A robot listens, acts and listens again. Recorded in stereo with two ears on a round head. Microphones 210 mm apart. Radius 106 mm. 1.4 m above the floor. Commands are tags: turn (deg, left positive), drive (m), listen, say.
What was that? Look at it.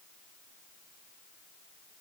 <listen/>
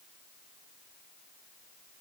<listen/>
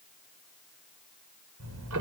<turn deg="-65"/>
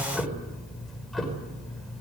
<say>Facing the ticking, over 4 m away.</say>